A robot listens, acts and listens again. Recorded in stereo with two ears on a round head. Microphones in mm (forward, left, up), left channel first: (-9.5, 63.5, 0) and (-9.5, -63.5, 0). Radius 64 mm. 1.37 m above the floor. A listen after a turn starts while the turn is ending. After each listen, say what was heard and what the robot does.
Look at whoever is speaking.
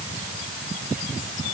Keep listening.
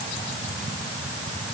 Keep listening.
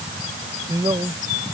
The man speaking: about 25° right or 155° right. Turn 25° right.
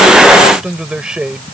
Found it: a man speaking, straight ahead.